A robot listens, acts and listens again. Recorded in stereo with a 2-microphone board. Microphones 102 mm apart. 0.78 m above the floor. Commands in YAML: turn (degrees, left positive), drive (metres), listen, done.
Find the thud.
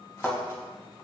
turn: 30
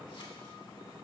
listen: true
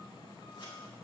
done: "I heard a thud, but can't make it out now. It was about 30° right or 150° left."